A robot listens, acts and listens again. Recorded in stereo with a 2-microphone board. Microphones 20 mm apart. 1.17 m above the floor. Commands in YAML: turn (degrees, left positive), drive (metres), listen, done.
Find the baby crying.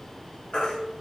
turn: 60
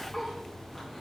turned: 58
turn: 10
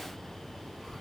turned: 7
listen: true
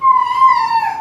done: "Found it: a baby crying, straight ahead, under 1 m away."